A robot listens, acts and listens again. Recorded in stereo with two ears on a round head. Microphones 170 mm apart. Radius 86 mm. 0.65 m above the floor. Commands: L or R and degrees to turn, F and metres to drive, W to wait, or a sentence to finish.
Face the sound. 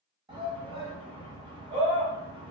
R25
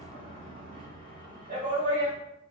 R125
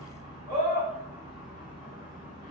R30
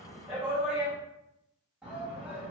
Found it: a shout, straight ahead.